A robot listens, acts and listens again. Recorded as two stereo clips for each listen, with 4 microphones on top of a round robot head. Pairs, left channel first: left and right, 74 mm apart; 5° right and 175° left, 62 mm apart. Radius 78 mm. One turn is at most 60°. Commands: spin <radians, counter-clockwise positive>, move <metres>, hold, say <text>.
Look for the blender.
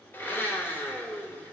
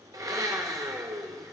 spin 1.05
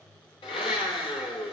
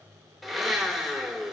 spin 1.05
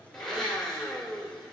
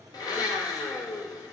say Found it: a blender, straight ahead.